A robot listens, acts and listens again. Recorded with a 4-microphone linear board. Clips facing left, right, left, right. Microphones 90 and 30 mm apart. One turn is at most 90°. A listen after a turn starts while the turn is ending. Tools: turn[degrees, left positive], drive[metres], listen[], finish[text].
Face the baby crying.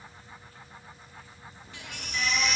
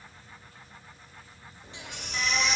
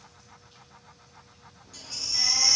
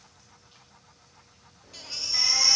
Thought: The baby crying: about 25° right or 155° right.
Action: turn[-25]
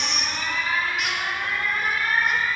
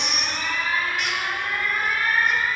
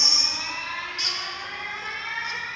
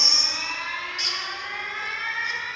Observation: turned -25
Action: listen[]
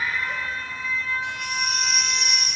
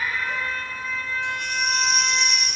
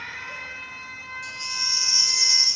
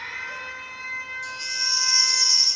Action: finish[Facing the baby crying.]